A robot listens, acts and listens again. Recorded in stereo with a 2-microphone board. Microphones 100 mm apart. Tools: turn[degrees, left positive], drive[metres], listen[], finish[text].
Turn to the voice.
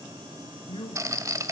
Thought: The man speaking: about 60° left or 120° left.
Action: turn[60]
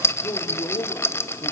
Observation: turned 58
Thought: So it is at 35° left.
Action: turn[35]
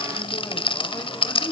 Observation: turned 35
Thought: The man speaking is now 25° left.
Action: turn[25]
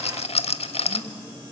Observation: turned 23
Action: listen[]
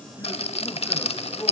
Thought: The man speaking is now 15° left.
Action: turn[15]
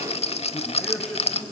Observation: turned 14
Action: finish[Facing the man speaking, 2 to 4 m away.]